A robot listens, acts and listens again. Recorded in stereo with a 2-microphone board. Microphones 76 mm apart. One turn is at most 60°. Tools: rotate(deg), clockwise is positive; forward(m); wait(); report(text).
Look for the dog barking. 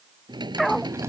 rotate(-30)
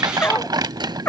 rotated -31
rotate(-60)
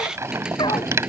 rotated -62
rotate(-60)
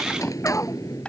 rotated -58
rotate(-30)
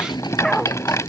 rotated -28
report("Found it: a dog barking, straight ahead.")